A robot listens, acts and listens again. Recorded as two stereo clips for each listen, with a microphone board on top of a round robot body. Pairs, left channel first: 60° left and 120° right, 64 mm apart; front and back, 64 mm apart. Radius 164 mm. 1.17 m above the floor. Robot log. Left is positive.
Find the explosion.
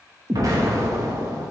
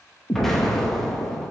note: The explosion: 85° right.
cmd yaw -85
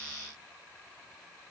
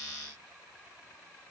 end: I heard an explosion from this way, but can't make it out now.